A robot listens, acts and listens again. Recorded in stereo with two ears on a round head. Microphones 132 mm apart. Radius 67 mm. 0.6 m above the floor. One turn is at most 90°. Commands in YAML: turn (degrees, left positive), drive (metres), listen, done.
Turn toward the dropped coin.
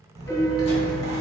turn: -35
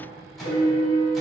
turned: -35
listen: true
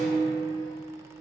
done: "I heard a dropped coin, but can't make it out now. It was about straight ahead or 110° right."